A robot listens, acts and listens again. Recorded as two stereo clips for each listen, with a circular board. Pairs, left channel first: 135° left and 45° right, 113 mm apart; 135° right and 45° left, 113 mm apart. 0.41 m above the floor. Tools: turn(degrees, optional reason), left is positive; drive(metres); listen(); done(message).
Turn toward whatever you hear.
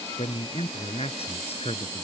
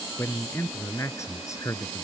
turn(degrees=165, reason="The man speaking: 165° left.")
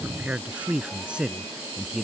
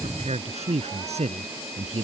turn(degrees=40, reason="The man speaking is now 40° left.")
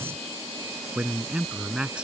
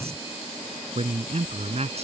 turn(degrees=35, reason="The man speaking is now 35° left.")
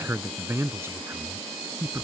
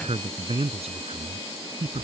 turn(degrees=25, reason="The man speaking is now 25° left.")
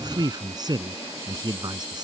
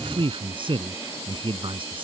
done("Found it: a man speaking, straight ahead.")